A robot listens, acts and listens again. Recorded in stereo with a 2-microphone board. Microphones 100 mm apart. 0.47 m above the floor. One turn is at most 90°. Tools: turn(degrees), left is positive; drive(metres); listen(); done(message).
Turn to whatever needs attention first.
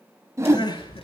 turn(degrees=45)
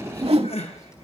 turn(degrees=90)
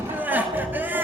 turn(degrees=-20)
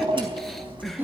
listen()
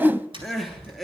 done("Found it: crying, straight ahead.")